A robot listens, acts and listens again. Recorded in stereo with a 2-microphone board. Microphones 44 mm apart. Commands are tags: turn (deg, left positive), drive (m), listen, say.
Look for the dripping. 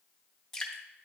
<turn deg="30"/>
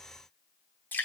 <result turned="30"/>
<turn deg="135"/>
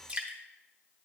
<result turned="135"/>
<turn deg="-25"/>
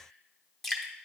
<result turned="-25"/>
<say>Found it: dripping, straight ahead.</say>